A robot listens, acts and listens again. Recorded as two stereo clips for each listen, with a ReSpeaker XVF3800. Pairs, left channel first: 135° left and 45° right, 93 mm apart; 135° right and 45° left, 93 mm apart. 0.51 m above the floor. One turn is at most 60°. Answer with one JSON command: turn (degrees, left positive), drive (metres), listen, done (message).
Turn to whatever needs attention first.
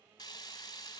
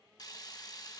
{"listen": true}
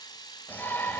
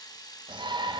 {"turn": 60}
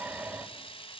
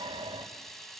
{"turn": 25}
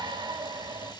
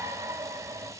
{"turn": -10}
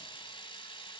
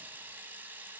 {"listen": true}
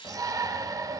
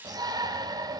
{"done": "Facing the shout, 2 to 4 m away."}